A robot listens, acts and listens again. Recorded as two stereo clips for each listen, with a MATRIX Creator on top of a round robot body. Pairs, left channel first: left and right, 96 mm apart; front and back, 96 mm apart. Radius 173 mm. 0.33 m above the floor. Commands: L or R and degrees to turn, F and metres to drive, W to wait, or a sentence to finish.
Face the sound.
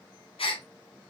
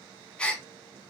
L80
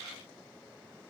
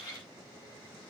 I heard a gasp from this way, but can't make it out now.